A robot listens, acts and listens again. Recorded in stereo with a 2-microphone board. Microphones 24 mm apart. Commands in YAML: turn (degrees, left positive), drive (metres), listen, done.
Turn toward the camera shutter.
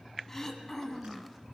listen: true
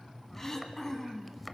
listen: true
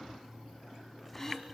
done: "I can't make out a camera shutter, only throat clearing."